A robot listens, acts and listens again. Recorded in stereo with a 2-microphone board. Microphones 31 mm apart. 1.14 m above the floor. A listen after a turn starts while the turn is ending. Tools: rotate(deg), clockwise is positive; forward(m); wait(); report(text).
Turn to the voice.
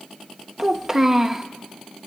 rotate(20)
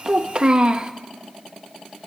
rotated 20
rotate(140)
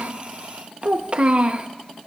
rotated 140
rotate(40)
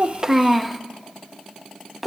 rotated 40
report("Facing the child speaking.")